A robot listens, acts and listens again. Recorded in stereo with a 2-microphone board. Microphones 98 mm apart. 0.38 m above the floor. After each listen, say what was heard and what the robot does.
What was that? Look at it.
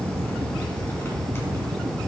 Keep listening.
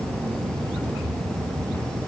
Keep listening.
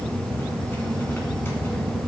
I can't make out anything to turn to.